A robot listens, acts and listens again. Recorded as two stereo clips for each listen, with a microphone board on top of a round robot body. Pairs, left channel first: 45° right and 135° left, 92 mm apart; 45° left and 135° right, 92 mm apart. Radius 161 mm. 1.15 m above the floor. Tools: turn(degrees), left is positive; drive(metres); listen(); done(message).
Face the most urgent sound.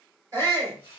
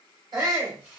turn(degrees=-175)
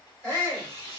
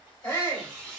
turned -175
turn(degrees=20)
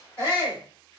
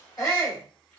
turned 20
done("Found it: a shout, straight ahead.")